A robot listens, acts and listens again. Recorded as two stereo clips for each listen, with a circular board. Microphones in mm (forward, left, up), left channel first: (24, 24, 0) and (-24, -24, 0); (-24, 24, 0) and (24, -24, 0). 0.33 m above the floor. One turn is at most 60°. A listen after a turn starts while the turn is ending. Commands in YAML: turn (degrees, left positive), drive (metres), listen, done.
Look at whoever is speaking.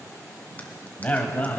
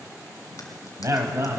turn: -15
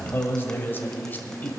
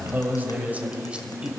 turn: 20
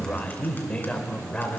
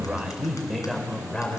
turn: 60
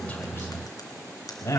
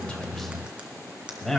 turn: 55
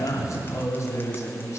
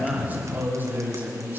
turn: 15
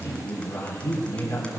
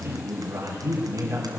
done: "Found it: a man speaking, straight ahead, 2 to 4 m away."